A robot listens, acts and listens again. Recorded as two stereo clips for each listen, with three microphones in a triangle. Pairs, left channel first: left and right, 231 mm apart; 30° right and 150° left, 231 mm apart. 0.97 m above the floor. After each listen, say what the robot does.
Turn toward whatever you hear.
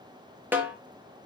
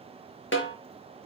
Turn 10° right.
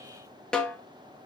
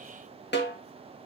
Found it: a snare drum, straight ahead.